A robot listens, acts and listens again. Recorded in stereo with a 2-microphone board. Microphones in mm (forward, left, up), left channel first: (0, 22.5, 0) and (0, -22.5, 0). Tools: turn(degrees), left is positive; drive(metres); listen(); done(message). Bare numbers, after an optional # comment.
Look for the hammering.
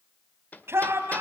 # The hammering: about 40° left or 140° left.
turn(40)
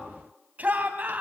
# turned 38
listen()
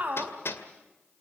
# So it is at 100° left.
turn(100)
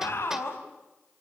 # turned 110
# Nothing new. It was at 10° right.
turn(-10)
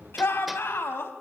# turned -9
listen()
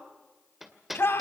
done("Found it: hammering, straight ahead, 2 to 4 m away.")